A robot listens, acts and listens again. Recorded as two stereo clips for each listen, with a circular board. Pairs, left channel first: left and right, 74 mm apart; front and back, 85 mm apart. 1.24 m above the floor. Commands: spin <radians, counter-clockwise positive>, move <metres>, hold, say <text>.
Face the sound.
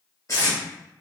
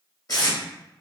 spin 0.79
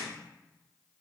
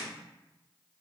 hold
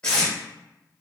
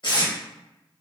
spin 0.26
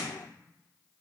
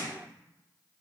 hold
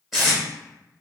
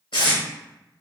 say Facing the tape being pulled.